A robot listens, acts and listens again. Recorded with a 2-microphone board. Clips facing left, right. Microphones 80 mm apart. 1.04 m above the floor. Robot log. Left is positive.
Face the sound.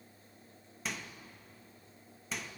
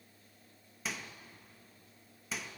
cmd yaw +30
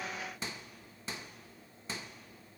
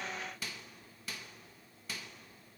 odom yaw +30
note: So it is at 155° left.
cmd yaw +155
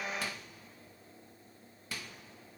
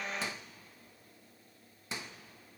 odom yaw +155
note: The microwave is now 25° right.
cmd yaw -25
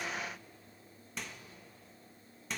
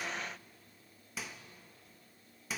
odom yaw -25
end: Facing the microwave, 1 to 2 m away.